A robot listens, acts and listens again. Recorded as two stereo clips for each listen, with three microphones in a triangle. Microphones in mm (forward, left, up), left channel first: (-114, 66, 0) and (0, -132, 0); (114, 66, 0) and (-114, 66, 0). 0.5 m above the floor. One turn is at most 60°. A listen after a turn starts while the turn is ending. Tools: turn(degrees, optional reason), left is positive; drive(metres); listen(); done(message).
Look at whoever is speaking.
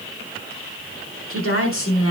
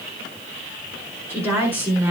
turn(degrees=60, reason="The woman speaking: 100° left.")
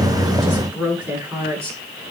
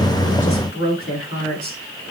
turn(degrees=20, reason="The woman speaking is now 20° left.")
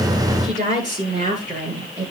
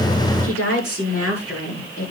done("Found it: a woman speaking, straight ahead.")